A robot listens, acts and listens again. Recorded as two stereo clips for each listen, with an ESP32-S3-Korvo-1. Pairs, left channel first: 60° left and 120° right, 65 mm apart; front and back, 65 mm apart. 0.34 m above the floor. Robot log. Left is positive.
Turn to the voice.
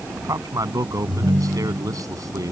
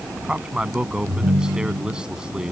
note: The man speaking: 100° right.
cmd yaw -100
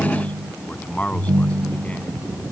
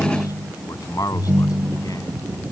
end: Found it: a man speaking, straight ahead.